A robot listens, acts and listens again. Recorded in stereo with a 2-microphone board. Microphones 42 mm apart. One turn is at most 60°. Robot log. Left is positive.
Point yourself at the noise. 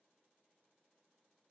cmd idle
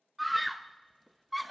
cmd yaw +30
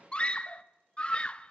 note: So it is at 150° left.
cmd yaw +60
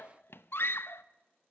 note: The scream is now 95° left.
cmd yaw +60
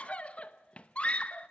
note: The scream is now 35° left.
cmd yaw +35
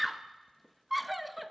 end: Found it: a scream, straight ahead.